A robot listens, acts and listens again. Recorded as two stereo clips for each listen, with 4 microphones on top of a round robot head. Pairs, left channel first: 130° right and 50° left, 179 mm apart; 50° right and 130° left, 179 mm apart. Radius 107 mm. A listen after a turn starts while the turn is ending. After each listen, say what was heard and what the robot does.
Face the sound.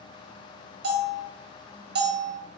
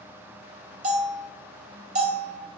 The bell: 80° left. Turn 80° left.
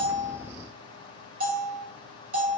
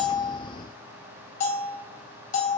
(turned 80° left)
Facing the bell, 1 to 2 m away.